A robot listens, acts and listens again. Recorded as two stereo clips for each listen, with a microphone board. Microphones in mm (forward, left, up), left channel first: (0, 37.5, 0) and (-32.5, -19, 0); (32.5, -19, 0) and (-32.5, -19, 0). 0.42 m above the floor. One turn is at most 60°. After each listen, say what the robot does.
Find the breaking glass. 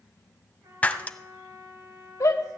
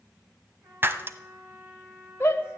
Turn 60° left.
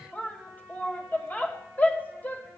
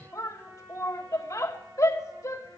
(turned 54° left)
Turn 60° left.
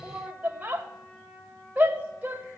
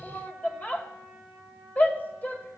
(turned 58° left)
Turn 15° left.
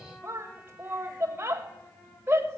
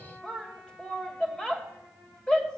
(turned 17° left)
Facing where the breaking glass came from. I can't hear it now.